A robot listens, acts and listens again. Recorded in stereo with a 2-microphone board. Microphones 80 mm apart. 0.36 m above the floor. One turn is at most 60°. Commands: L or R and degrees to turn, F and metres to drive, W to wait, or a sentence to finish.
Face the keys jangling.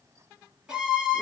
W
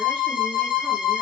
W
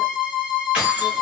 R30
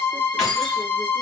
Facing the keys jangling, 1 to 2 m away.